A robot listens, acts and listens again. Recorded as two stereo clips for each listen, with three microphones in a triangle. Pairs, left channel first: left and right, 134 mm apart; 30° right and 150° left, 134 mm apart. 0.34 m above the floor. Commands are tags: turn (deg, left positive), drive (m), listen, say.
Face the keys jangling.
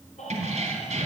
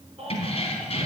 <turn deg="-65"/>
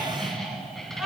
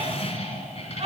<say>Facing the keys jangling.</say>